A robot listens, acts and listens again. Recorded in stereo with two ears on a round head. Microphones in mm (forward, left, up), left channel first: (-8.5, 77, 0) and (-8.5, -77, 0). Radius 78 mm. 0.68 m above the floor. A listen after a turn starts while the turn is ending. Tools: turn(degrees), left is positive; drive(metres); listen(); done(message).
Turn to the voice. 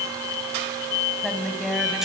turn(degrees=30)
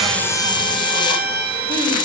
listen()
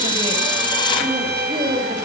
turn(degrees=-30)
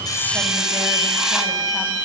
listen()
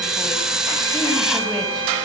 listen()
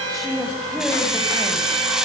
done("Facing the woman speaking, over 4 m away.")